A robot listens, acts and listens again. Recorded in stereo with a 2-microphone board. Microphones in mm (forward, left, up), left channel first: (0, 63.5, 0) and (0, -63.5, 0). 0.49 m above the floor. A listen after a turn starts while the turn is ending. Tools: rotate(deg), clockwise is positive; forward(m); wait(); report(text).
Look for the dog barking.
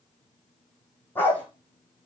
rotate(-30)
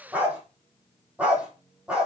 rotate(10)
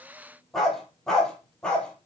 report("Found it: a dog barking, straight ahead, 2 to 4 m away.")